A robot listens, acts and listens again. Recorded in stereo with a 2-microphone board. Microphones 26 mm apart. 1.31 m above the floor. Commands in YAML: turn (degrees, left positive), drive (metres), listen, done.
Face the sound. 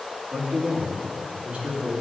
turn: -60
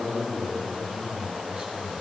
turn: -60
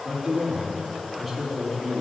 done: "Facing the man speaking, 2 to 4 m away."